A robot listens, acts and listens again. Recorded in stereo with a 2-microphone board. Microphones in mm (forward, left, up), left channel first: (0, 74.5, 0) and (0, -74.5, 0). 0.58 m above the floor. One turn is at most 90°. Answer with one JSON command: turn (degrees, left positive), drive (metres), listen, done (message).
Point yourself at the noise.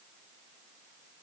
{"listen": true}
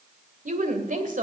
{"turn": -65}
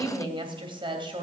{"turn": -35}
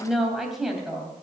{"done": "Facing the woman speaking."}